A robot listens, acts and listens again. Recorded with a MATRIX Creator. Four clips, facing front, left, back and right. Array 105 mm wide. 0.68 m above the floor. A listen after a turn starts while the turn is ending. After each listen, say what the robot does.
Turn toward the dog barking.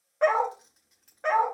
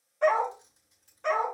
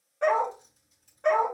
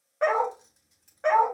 Turn 60° right.
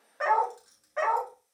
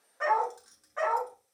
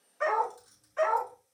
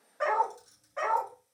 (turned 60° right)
Turn 10° left.
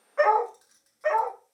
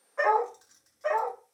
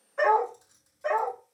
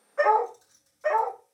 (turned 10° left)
Turn 10° right.
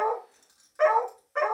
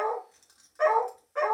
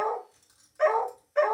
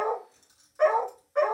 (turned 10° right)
Facing the dog barking.